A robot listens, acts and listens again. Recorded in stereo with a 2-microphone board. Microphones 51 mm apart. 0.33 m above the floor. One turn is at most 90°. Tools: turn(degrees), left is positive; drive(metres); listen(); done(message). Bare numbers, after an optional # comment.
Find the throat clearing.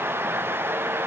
listen()
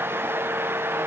listen()
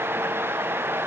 done("I can't make out throat clearing.")